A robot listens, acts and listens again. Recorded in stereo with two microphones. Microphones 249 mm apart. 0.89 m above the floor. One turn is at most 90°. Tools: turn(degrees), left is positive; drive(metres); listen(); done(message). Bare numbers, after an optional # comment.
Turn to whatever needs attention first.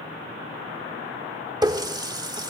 listen()
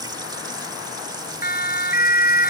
# The siren: about 35° left or 145° left.
turn(35)
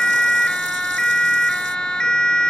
done("Found it: a siren, straight ahead.")